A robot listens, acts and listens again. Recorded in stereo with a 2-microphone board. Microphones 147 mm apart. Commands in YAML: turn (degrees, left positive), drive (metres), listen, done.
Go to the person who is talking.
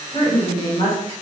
turn: 40
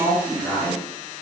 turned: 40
drive: 1.0
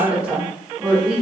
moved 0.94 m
turn: -10
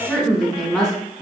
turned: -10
drive: 1.0
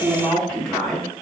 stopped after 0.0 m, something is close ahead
done: "I am next to the woman speaking."